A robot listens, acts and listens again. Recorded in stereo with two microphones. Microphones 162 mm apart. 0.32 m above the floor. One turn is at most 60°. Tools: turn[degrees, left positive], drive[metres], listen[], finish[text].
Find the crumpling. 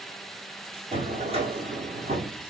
Action: listen[]
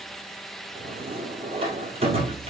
Action: listen[]
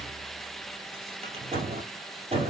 Action: finish[I can't make out crumpling, only a drawer.]